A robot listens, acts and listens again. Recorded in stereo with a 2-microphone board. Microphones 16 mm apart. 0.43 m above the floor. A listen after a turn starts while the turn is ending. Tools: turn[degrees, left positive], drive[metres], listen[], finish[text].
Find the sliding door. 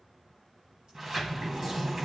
Thought: The sliding door: about 25° right or 155° right.
Action: turn[-25]
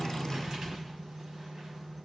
Thought: So it is at 125° right.
Action: turn[-125]
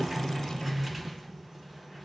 Thought: The sliding door is now 10° right.
Action: turn[-10]
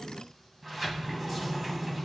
Action: finish[Found it: a sliding door, straight ahead, 2 to 4 m away.]